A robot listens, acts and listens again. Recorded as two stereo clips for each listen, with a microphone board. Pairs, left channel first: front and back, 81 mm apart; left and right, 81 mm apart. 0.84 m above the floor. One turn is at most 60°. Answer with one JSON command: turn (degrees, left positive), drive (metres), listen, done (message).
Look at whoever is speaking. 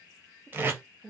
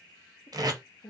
{"turn": 60}
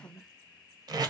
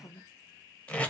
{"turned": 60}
{"turn": 50}
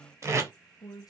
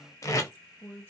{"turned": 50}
{"turn": 25}
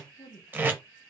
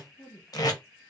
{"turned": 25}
{"turn": 10}
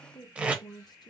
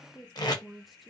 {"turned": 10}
{"done": "Facing the woman speaking, under 1 m away."}